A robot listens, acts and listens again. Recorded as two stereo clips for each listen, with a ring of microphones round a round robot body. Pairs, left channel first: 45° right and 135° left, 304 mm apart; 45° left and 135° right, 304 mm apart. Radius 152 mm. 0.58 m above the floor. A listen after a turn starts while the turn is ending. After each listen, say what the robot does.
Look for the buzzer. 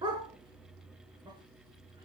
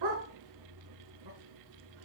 Keep listening.
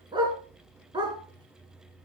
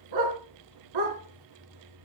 Keep listening.
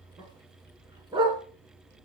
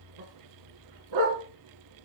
I can't make out a buzzer to turn to.